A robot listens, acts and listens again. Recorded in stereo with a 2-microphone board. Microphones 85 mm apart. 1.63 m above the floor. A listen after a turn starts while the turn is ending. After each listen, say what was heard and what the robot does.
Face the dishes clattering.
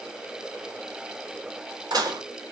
The dishes clattering: about 55° right or 125° right. Turn 55° right.
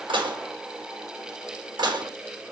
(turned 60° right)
So it is at 65° right. Turn 65° right.
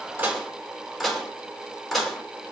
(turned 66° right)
Found it: dishes clattering, straight ahead.